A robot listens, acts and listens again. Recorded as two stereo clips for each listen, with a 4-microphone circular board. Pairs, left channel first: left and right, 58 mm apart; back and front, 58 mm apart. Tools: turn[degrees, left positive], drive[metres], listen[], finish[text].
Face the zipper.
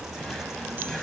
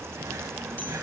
Action: listen[]
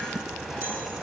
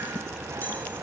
Action: listen[]
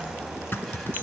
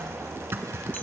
Thought: The zipper: 45° left.
Action: turn[45]
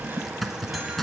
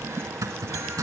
Action: finish[Found it: a zipper, straight ahead, 1 to 2 m away.]